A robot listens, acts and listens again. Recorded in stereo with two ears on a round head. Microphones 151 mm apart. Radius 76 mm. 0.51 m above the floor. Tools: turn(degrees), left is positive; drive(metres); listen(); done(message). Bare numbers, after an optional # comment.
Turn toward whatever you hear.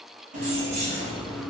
# The keys jangling: about 35° right or 145° right.
turn(-35)
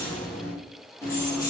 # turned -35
# So it is at 25° left.
turn(25)
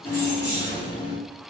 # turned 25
# The keys jangling is now 30° left.
turn(30)
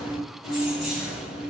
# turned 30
done("Found it: keys jangling, straight ahead.")